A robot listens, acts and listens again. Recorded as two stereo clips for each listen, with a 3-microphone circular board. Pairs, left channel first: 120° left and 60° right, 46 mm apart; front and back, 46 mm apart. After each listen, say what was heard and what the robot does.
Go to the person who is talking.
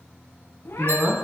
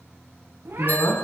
Drive 1.0 m forward.
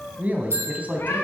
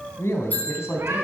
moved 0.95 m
Drive 1.0 m forward.
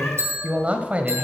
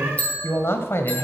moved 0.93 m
Drive 1.0 m forward.
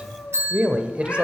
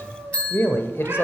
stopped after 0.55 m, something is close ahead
I am next to the man speaking.